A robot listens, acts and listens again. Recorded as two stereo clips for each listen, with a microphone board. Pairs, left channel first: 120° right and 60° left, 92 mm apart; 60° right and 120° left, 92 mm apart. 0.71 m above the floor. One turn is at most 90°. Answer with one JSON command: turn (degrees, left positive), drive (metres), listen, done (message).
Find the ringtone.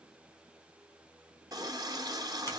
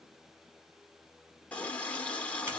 {"listen": true}
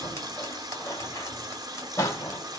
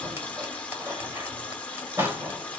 {"listen": true}
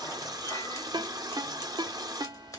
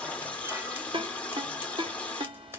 {"turn": 90}
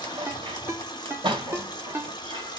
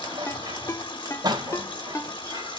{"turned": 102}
{"done": "Found it: a ringtone, straight ahead."}